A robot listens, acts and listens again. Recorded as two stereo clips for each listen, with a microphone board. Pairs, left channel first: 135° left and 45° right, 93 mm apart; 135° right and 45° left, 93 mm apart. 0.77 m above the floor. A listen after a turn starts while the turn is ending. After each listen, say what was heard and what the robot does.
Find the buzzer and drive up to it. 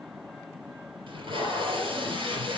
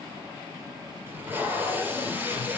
Keep listening.
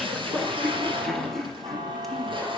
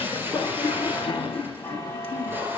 The buzzer: 80° right. Turn 80° right.
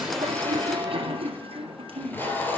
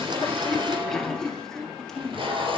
Keep listening.
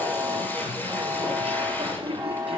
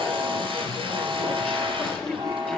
Drive 1.0 m forward.
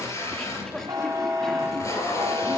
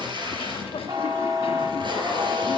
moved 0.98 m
Drive 1.0 m forward.
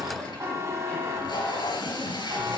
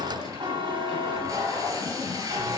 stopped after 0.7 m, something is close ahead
The buzzer is now 10° left. Turn 10° left.
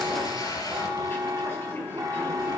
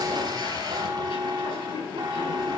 I am next to the buzzer.